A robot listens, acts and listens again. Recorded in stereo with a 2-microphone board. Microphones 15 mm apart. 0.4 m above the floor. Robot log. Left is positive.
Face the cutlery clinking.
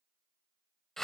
cmd idle
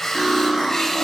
note: The cutlery clinking: about 40° right or 140° right.
cmd yaw -40
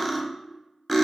end: Facing the cutlery clinking.